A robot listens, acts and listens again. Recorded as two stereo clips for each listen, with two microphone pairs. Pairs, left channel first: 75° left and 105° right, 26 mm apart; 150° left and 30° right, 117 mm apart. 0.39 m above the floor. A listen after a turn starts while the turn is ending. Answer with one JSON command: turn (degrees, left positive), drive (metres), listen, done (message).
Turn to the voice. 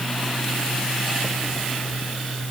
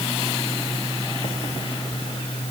{"listen": true}
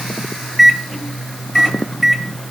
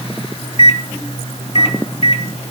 {"listen": true}
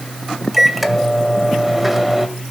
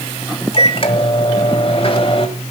{"done": "I can't make out anyone speaking to turn to."}